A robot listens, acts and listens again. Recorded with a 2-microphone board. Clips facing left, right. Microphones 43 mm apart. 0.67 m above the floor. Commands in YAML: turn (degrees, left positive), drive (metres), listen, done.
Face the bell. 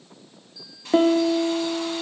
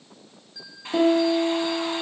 turn: -70
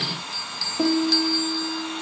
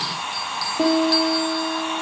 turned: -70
listen: true
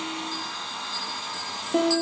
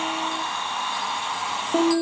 listen: true
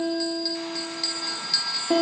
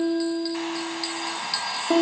turn: -15
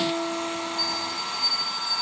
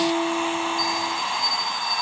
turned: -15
listen: true
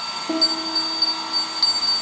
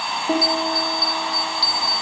listen: true
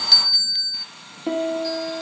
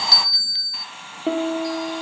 done: "Found it: a bell, straight ahead."